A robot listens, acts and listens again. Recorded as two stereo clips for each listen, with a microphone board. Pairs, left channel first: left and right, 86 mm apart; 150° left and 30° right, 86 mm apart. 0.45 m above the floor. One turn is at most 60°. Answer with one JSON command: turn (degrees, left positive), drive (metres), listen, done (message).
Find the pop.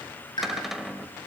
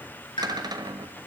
{"turn": 60}
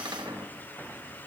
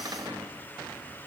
{"turn": 60}
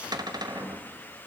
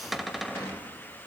{"done": "I heard a pop from this way, but can't make it out now."}